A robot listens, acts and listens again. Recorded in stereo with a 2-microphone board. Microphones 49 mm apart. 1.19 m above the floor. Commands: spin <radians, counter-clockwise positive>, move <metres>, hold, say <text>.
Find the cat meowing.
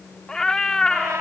spin 0.52
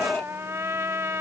spin 2.44
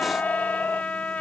hold
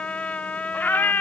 spin 0.79
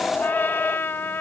spin 0.44
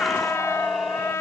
say Found it: a cat meowing, straight ahead.